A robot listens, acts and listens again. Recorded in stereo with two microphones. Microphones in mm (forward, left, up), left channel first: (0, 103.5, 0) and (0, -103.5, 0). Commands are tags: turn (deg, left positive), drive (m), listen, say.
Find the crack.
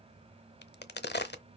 <turn deg="55"/>
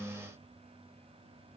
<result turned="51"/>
<listen/>
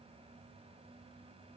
<say>I heard a crack, but can't make it out now. It was about 5° left or 75° left.</say>